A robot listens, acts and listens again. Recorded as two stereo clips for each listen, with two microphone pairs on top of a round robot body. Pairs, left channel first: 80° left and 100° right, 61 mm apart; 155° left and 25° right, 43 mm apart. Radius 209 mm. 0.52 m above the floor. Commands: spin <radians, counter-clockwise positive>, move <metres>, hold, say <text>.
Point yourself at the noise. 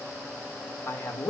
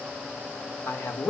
spin 2.27
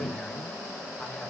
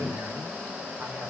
hold
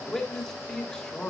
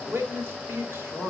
say Found it: a man speaking, straight ahead.